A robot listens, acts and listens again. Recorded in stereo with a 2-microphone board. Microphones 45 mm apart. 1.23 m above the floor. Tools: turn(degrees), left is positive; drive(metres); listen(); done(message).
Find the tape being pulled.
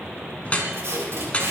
turn(degrees=-75)
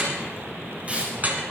turn(degrees=-30)
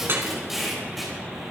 done("Found it: tape being pulled, straight ahead.")